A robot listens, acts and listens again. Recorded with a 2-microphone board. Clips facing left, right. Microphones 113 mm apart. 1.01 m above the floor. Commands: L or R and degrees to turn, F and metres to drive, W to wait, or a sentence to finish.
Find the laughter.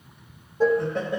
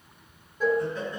L65
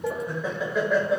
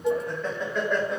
Facing the laughter, 1 to 2 m away.